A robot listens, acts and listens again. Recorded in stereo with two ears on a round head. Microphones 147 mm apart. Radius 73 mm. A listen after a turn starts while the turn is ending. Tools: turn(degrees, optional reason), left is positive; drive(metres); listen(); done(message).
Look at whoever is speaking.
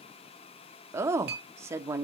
turn(degrees=-15, reason="The woman speaking: about 15° right or 165° right.")
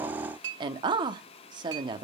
turn(degrees=-150, reason="So it is at 150° right.")
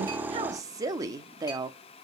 turn(degrees=-25, reason="The woman speaking is now 25° right.")
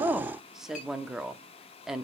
done("Found it: a woman speaking, straight ahead.")